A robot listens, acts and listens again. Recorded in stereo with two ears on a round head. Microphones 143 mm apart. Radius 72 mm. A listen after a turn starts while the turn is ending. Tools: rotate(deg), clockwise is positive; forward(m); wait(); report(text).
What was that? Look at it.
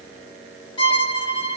rotate(-35)
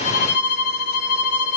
rotate(-115)
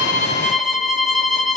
report("Found it: a violin, straight ahead, 1 to 2 m away.")